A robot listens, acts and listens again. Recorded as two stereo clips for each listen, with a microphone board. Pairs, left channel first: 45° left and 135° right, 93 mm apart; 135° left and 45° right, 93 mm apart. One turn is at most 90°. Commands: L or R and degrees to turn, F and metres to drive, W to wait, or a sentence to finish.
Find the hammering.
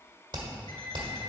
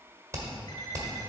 R90
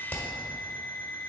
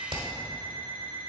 R30
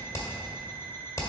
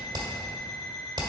R15
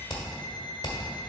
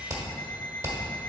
Facing the hammering, 1 to 2 m away.